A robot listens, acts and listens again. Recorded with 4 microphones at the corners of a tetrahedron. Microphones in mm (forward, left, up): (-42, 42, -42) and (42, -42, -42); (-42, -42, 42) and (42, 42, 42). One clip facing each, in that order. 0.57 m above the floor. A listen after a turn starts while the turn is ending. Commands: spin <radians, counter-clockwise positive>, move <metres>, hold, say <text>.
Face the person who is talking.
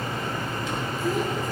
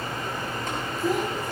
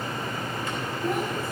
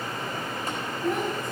spin -0.87
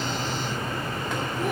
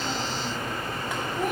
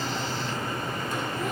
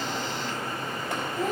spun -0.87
hold
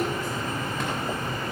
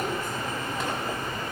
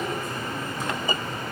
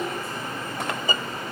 hold
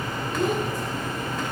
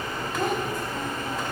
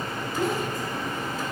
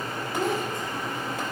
spin -0.35
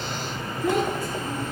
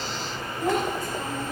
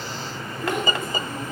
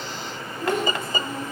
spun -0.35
spin -0.17
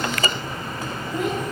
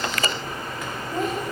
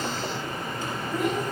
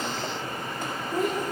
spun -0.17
say Found it: a child speaking, straight ahead.